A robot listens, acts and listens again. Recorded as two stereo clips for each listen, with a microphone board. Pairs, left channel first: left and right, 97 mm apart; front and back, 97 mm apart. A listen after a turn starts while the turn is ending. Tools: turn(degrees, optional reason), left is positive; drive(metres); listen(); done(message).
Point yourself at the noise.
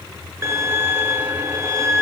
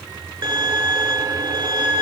turn(degrees=-145, reason="The violin: 145° right.")
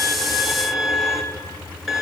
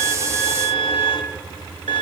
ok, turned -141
done("Facing the violin, 1 to 2 m away.")